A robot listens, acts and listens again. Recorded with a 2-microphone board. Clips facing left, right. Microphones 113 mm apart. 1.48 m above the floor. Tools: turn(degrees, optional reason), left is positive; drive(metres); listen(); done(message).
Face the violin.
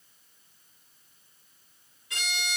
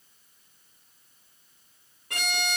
turn(degrees=-55, reason="The violin: about 55° right or 125° right.")
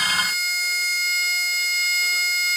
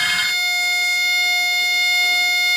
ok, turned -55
turn(degrees=-70, reason="So it is at 70° right.")
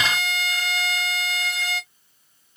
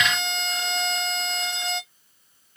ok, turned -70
turn(degrees=-20, reason="The violin is now 20° right.")
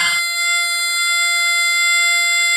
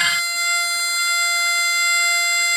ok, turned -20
done("Found it: a violin, straight ahead, under 1 m away.")